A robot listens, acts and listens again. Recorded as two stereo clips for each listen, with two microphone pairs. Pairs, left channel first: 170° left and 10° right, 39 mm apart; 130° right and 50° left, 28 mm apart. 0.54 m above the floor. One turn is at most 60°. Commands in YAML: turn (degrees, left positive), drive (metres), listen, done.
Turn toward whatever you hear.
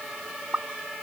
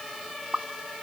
turn: 20
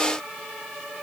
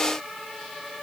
done: "I heard a pop from this way, but can't make it out now."